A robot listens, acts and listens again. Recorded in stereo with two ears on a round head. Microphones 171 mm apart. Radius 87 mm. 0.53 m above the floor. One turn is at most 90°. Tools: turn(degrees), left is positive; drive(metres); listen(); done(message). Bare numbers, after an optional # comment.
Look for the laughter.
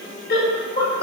# The laughter: about 55° left or 125° left.
turn(55)
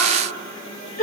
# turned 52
# So it is at 55° left.
turn(55)
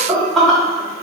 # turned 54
done("Facing the laughter.")